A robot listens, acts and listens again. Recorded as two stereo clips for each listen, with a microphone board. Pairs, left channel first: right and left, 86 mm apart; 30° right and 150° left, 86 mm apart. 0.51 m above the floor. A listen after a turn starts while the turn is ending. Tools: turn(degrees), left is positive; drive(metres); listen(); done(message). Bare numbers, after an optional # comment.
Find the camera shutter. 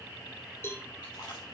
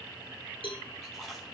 listen()
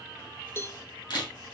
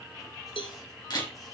# The camera shutter: 65° right.
turn(-65)
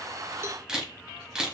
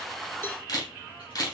# The camera shutter is now 10° left.
turn(10)
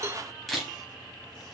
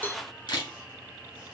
done("Facing the camera shutter.")